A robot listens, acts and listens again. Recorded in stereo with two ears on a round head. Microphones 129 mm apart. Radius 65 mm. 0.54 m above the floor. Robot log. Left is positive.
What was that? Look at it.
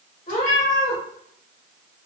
note: The cat meowing: about 55° left or 125° left.
cmd yaw +55
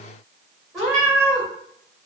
end: Found it: a cat meowing, straight ahead.